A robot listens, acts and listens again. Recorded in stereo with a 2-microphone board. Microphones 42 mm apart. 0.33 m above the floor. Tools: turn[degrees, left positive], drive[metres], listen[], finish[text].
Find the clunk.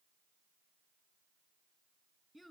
Action: listen[]
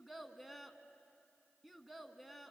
Action: listen[]
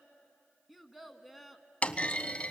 Thought: The clunk: about 35° left or 145° left.
Action: turn[35]
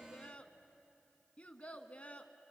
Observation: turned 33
Action: listen[]
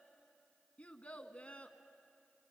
Action: finish[I heard a clunk, but can't make it out now. It was about straight ahead or 115° left.]